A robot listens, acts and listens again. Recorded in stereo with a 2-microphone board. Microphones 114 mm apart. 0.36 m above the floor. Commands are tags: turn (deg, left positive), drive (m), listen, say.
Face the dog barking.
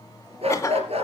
<turn deg="-65"/>
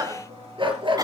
<turn deg="-50"/>
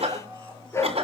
<turn deg="25"/>
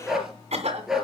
<say>Facing the dog barking.</say>